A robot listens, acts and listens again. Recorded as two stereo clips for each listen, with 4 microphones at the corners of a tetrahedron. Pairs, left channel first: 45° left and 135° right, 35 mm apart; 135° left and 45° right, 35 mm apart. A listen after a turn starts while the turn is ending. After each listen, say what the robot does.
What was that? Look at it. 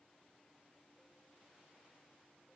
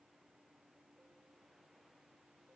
Keep listening.
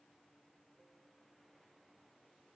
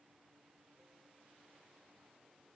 Keep listening.
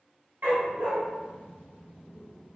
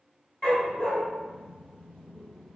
Turn 160° right.
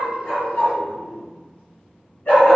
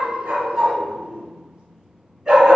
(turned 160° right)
Turn 25° left.
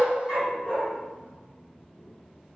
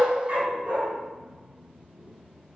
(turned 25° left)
Found it: a dog barking, straight ahead.